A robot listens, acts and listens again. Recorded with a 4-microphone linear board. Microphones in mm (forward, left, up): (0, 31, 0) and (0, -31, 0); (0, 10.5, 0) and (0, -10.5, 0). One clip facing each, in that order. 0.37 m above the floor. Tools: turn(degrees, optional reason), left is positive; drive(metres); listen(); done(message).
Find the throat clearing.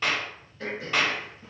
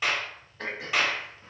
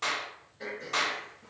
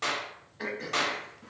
turn(degrees=-90)
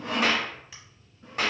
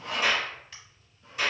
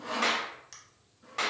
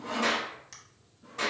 done("Facing the throat clearing.")